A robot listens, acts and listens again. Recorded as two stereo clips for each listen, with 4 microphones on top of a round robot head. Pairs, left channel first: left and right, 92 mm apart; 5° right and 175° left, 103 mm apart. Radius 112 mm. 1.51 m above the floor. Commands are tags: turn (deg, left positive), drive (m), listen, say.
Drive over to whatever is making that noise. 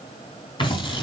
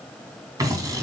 <turn deg="120"/>
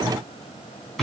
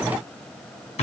<drive m="1.0"/>
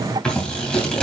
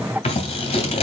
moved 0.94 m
<turn deg="10"/>
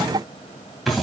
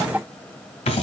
<drive m="1.0"/>
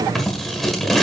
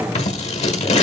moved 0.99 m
<drive m="1.0"/>
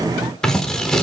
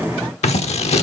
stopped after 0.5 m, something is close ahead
<say>I am next to the scissors.</say>